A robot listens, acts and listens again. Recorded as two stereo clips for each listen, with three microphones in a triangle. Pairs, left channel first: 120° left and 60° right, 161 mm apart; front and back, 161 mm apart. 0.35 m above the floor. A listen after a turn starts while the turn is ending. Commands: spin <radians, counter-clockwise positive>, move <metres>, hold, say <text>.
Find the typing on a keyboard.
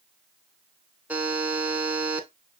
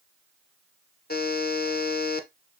hold
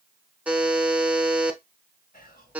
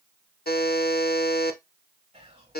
hold
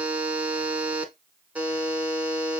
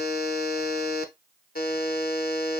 say I can't make out typing on a keyboard to turn to.